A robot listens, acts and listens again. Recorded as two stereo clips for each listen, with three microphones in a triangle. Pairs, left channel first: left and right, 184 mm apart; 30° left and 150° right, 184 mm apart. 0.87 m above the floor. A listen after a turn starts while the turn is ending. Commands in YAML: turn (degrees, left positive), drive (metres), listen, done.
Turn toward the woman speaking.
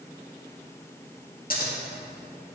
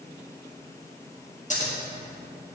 listen: true
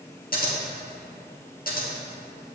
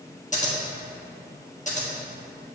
listen: true
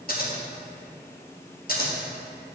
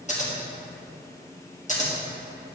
done: "I can't make out a woman speaking to turn to."